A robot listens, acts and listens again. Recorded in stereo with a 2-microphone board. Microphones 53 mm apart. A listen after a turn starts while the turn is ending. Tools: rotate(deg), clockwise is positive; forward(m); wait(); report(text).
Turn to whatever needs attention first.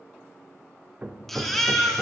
rotate(-30)
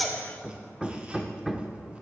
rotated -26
wait()
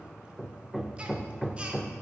wait()
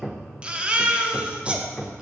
rotate(25)
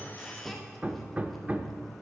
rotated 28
wait()
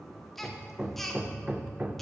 report("Found it: a baby crying, straight ahead, 1 to 2 m away.")